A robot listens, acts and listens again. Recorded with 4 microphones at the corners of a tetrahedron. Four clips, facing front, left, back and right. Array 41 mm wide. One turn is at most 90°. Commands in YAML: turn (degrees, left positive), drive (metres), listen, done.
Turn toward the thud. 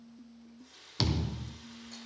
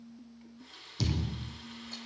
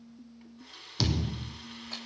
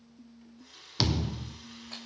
turn: -75
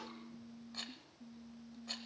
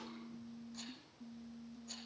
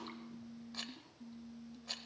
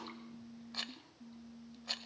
done: "Facing where the thud came from. I can't hear it now."